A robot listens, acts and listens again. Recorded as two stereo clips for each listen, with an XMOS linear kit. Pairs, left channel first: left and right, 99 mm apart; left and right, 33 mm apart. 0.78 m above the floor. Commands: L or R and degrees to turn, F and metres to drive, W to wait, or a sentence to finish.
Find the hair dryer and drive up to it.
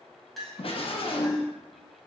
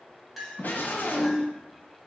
W
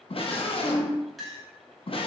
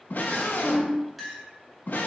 W
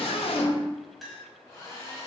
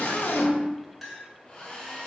L30
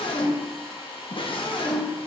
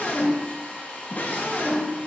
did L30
L120
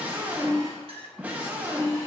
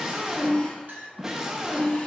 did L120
W
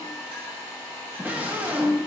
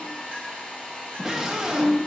L35
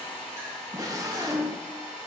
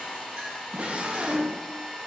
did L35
L15
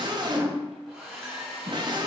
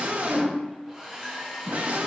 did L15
F1.0
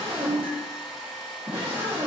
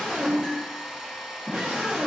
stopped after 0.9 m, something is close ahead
I am next to the hair dryer.